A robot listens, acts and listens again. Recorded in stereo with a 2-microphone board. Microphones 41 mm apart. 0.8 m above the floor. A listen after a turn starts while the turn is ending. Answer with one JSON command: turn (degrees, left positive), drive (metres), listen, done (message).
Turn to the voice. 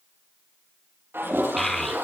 {"turn": 30}
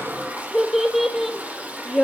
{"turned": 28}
{"turn": 30}
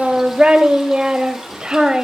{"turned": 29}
{"turn": -25}
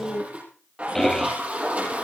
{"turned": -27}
{"done": "Facing the child speaking, 2 to 4 m away."}